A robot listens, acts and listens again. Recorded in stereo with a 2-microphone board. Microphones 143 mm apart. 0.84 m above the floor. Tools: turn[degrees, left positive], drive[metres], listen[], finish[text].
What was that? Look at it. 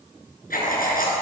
Action: turn[90]
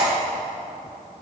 Thought: So it is at 10° right.
Action: turn[-10]
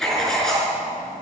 Action: finish[Facing the writing, over 4 m away.]